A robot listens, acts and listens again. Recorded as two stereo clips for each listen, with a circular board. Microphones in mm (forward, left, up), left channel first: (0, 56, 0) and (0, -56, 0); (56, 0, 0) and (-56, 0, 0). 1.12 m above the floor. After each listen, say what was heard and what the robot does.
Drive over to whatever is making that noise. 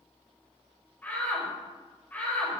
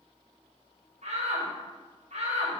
The shout: 165° left. Turn 165° left.
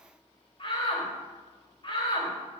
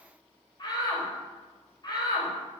The shout is now 50° left. Turn 50° left.
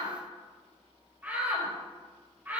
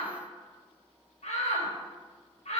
The shout is now 15° right. Turn 15° right.
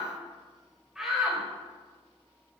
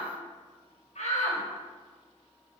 Drive 1.0 m forward.
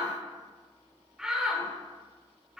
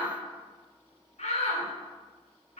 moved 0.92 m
Drive 1.0 m forward.
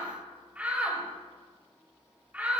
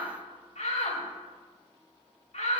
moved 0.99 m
The shout is now 15° right. Turn 15° right.
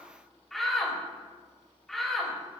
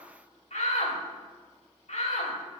Drive 1.0 m forward.
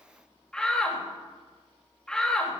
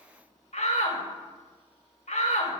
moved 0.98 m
Drive 1.0 m forward.
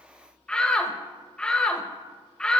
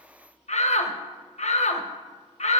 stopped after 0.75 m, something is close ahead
The shout is now 10° left. Turn 10° left.
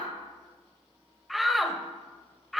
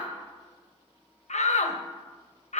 I am next to the shout.